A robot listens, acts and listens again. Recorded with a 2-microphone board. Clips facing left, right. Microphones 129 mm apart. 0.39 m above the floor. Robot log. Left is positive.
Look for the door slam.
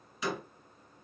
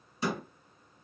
note: The door slam: about 35° right or 145° right.
cmd yaw -35
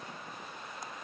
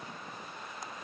cmd idle
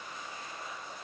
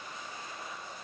end: I heard a door slam, but can't make it out now. It was about straight ahead or 110° right.